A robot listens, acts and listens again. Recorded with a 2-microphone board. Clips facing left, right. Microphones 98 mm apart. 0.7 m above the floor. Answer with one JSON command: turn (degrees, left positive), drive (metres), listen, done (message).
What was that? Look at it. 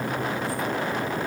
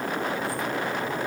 {"listen": true}
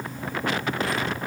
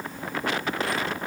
{"listen": true}
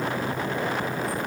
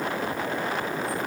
{"done": "I can't make out anything to turn to."}